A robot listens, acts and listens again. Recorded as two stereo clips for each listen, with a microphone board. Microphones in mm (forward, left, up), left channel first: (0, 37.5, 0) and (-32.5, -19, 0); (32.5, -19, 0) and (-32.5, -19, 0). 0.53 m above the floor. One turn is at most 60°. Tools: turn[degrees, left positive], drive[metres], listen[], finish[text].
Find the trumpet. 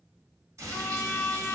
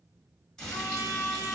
Thought: The trumpet: 20° left.
Action: turn[20]
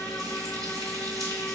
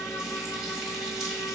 Action: listen[]
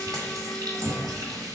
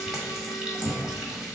Action: listen[]
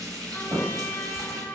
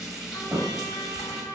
Action: finish[Facing the trumpet, under 1 m away.]